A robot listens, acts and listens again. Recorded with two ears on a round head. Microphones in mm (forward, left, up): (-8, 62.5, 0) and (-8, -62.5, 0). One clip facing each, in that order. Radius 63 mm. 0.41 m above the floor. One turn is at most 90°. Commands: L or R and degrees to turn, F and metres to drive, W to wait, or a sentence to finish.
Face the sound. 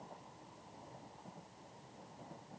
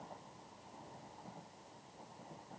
W
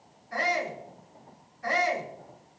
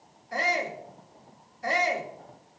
R30
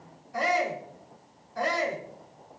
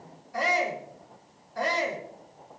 Facing the shout, over 4 m away.